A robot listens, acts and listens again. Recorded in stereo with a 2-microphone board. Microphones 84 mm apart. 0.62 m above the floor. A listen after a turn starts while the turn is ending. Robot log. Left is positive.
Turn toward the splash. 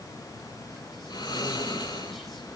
cmd idle
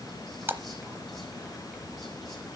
note: The splash: about 25° right or 155° right.
cmd yaw -25
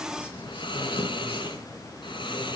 cmd idle
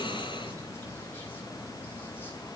end: I heard a splash, but can't make it out now. It was about straight ahead or 130° right.